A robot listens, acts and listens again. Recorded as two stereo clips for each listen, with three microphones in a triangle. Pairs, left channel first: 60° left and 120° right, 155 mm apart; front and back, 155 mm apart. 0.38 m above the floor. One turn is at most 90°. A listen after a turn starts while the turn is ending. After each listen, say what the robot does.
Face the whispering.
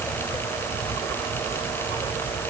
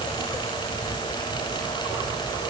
Keep listening.
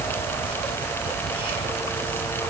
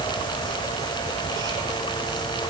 Keep listening.
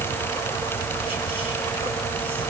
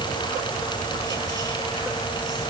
I can't make out whispering.